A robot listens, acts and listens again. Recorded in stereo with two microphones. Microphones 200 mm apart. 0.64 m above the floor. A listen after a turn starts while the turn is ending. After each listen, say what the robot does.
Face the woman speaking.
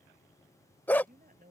Turn 45° right.
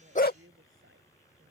Turn 90° right.
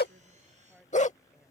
Facing the woman speaking.